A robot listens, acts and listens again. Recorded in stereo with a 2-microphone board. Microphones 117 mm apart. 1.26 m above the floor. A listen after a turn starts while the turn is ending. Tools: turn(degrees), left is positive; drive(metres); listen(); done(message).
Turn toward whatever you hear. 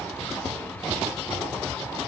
listen()
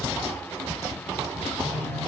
turn(degrees=90)
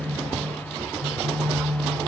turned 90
done("Found it: a phone buzzing, straight ahead, 2 to 4 m away.")